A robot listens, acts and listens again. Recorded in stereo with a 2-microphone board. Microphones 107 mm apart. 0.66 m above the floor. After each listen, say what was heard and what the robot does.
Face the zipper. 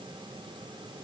Keep listening.
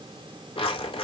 The zipper: about 60° left or 120° left. Turn 60° left.
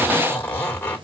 So it is at 15° left. Turn 15° left.
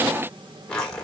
The zipper is now 10° left. Turn 10° left.
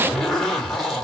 Facing the zipper.